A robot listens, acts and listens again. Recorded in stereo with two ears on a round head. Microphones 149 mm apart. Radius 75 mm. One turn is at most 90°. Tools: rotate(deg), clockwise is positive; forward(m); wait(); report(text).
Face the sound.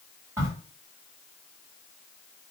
rotate(30)
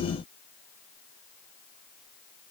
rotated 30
wait()
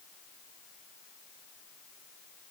report("I heard a crack, but can't make it out now. It was about 15° left or 135° right.")